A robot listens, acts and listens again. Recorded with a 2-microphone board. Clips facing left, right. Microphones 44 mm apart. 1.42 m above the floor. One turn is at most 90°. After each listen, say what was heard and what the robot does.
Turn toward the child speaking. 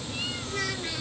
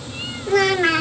The child speaking: about 70° right or 110° right. Turn 70° right.
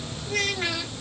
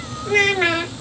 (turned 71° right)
So it is at 40° right. Turn 40° right.
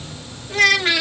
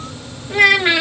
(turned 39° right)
The child speaking is now 20° right. Turn 20° right.
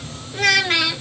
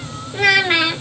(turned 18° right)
The child speaking is now 15° right. Turn 15° right.
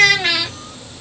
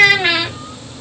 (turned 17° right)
The child speaking is now 15° right. Turn 15° right.
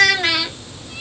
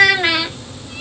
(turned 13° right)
The child speaking is now 10° right. Turn 10° right.
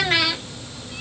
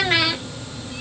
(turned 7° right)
Facing the child speaking.